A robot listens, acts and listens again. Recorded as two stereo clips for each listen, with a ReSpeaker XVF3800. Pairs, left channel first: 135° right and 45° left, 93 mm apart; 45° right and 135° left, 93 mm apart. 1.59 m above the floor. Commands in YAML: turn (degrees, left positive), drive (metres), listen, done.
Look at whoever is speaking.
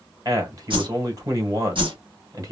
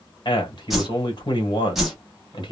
done: "Found it: a man speaking, straight ahead."